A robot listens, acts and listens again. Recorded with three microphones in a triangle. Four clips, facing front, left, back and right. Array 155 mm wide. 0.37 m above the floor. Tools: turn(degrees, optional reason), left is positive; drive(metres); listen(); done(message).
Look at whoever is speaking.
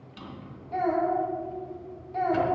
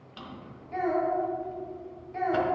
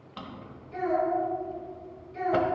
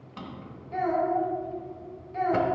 done("Facing the child speaking.")